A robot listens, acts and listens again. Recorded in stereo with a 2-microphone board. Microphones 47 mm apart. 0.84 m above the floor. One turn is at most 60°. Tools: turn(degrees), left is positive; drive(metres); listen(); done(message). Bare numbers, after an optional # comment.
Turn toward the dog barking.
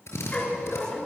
# The dog barking: about 30° left or 150° left.
turn(30)
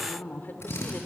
listen()
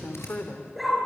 done("Found it: a dog barking, straight ahead.")